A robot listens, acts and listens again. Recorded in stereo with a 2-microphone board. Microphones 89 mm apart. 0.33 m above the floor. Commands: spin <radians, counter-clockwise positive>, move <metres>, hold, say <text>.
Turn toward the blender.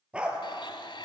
spin 1.13
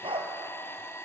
spin 0.52
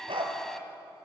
say Found it: a blender, straight ahead.